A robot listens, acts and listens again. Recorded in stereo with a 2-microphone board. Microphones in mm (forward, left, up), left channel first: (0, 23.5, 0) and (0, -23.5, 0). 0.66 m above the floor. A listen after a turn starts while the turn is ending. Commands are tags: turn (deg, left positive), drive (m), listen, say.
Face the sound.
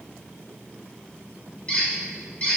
<turn deg="25"/>
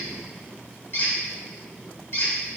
<turn deg="125"/>
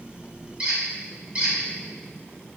<turn deg="-25"/>
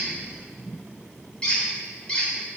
<turn deg="15"/>
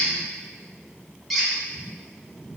<say>Found it: a squeak, straight ahead.</say>